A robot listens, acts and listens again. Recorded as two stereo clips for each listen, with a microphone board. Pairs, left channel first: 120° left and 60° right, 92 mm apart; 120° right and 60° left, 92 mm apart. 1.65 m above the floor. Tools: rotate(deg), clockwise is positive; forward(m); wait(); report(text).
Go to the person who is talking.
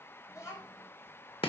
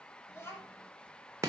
rotate(-180)
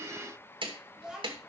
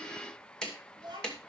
rotate(-25)
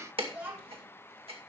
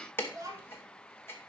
rotate(-10)
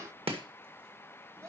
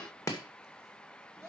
forward(1.0)
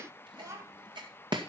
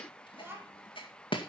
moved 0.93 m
forward(1.0)
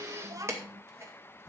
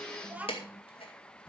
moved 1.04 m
rotate(10)
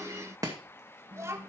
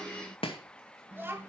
forward(1.0)
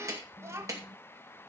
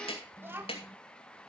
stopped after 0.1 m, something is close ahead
report("Arrived at the child speaking, straight ahead.")